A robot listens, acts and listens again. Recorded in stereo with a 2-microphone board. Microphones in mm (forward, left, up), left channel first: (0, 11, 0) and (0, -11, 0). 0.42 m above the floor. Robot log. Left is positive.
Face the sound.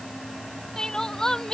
note: The crying: about 25° left or 155° left.
cmd yaw +25
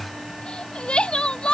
note: So it is at 130° left.
cmd yaw +130
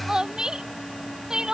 note: The crying is now 30° right.
cmd yaw -30
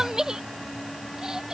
note: The crying is now 25° right.
cmd yaw -25
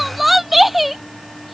end: Found it: crying, straight ahead.